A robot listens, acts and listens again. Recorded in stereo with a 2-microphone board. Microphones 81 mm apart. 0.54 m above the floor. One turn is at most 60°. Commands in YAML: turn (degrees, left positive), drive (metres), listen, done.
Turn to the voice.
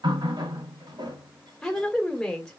turn: 30
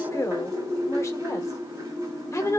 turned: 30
turn: 60
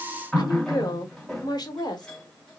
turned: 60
turn: 60
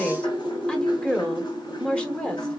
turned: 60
turn: 15
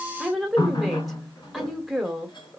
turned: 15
done: "Found it: a woman speaking, straight ahead, 2 to 4 m away."